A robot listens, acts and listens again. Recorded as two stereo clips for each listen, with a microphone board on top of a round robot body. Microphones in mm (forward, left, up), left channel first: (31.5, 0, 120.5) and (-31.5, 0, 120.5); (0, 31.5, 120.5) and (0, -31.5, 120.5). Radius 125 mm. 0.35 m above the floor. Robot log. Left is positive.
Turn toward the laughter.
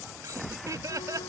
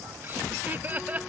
note: The laughter: 155° right.
cmd yaw -155
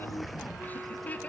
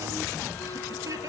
note: The laughter is now 65° right.
cmd yaw -65
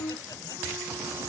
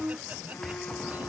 cmd idle
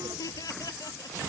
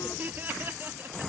note: The laughter is now 30° right.
cmd yaw -30
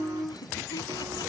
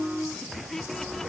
note: The laughter is now 10° left.
cmd yaw +10
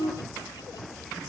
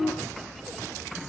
cmd idle
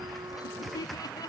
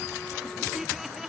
end: Facing the laughter.